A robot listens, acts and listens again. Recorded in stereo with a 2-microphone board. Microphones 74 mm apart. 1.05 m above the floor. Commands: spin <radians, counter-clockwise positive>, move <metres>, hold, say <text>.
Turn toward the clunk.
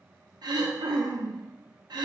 hold
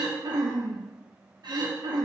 hold
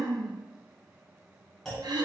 spin 0.52
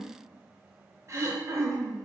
hold
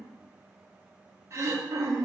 say I heard a clunk, but can't make it out now. It was about 30° right or 150° left.